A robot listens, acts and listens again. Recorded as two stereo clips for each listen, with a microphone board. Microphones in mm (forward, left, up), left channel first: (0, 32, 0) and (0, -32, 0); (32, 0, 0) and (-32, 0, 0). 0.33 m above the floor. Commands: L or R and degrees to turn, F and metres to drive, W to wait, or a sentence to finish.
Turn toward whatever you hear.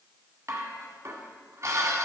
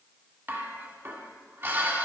R130
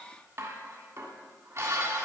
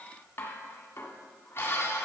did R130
R50
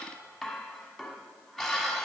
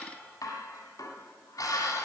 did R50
Found it: dishes clattering, straight ahead, 1 to 2 m away.